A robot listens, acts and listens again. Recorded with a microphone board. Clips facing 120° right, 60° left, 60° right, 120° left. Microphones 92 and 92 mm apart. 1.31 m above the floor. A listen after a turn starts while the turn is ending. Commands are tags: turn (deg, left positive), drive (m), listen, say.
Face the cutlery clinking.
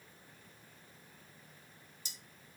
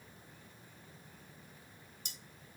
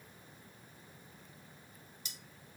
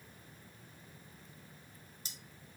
<turn deg="70"/>
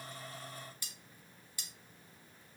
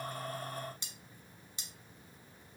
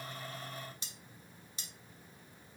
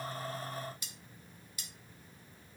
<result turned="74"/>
<say>Found it: cutlery clinking, straight ahead.</say>